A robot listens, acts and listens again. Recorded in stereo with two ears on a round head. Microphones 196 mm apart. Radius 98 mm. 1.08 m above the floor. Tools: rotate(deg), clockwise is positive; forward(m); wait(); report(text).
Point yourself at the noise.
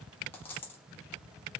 rotate(-30)
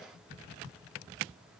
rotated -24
wait()
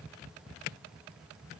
report("I heard a dropped coin, but can't make it out now. It was about 15° right or 145° left.")